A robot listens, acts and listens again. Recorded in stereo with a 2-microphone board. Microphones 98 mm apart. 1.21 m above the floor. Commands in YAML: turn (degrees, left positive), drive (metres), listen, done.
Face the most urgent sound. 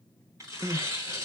turn: -40
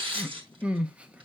turn: -15
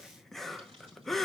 done: "Found it: crying, straight ahead."